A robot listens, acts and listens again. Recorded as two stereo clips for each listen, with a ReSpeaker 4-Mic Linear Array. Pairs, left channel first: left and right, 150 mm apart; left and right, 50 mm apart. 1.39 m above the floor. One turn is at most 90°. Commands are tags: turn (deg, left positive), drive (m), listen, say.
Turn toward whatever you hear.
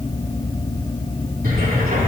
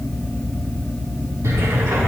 <turn deg="-90"/>
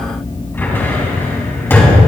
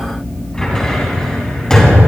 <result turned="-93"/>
<turn deg="15"/>
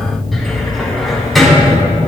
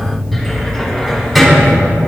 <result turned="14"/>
<say>Found it: a cupboard door, straight ahead.</say>